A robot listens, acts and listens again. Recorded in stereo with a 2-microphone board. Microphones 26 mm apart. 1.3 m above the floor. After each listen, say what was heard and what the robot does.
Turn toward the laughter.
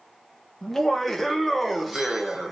The laughter: about 15° right or 165° right. Turn 15° right.
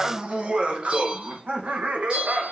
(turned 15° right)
So it is at 110° right. Turn 110° right.
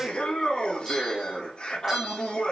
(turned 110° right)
The laughter is now 30° left. Turn 30° left.
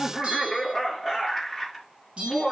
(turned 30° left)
The laughter is now 10° right. Turn 10° right.
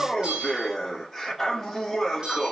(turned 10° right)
Found it: laughter, straight ahead, 2 to 4 m away.